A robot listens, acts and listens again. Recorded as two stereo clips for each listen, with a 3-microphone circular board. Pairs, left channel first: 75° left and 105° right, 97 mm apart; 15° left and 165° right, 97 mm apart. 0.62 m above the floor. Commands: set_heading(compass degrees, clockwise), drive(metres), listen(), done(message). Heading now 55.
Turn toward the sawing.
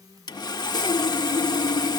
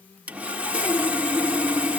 set_heading(295)
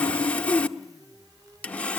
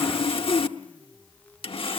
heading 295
done("Found it: sawing, straight ahead, under 1 m away.")